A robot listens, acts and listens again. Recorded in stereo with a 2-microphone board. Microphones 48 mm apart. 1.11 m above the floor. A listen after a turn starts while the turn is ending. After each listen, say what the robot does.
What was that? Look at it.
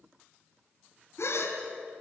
Turn 90° left.
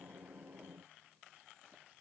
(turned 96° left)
Facing where the gasp came from. I can't hear it now.